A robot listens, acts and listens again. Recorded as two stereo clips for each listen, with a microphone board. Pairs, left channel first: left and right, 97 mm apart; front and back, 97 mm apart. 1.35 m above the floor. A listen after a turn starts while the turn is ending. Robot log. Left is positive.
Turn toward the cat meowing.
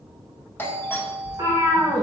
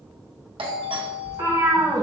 note: The cat meowing: 135° right.
cmd yaw -135
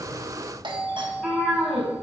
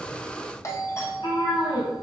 end: Found it: a cat meowing, straight ahead, 2 to 4 m away.